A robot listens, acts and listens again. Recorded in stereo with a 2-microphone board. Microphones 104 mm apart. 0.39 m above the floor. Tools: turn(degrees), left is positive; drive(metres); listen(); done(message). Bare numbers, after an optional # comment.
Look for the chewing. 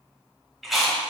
turn(30)
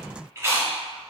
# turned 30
# So it is at 30° right.
turn(-30)
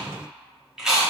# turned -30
done("Facing the chewing, under 1 m away.")